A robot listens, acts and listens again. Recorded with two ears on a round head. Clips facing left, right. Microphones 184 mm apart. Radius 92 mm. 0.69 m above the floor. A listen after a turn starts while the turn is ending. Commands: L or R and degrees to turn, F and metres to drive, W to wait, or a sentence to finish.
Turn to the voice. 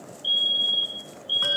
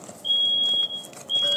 W
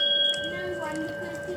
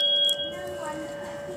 L30
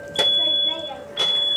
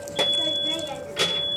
R25
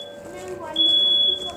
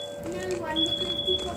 R35
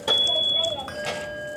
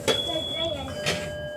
R30
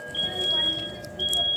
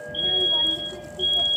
W
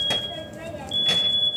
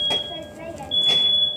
L15
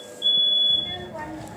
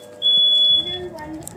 Found it: a child speaking, straight ahead.